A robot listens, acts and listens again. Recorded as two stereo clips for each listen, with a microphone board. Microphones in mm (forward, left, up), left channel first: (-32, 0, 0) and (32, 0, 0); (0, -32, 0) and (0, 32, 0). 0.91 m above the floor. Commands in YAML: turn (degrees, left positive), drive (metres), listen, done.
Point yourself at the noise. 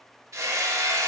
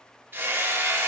turn: 35
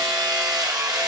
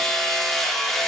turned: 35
done: "Found it: hammering, straight ahead."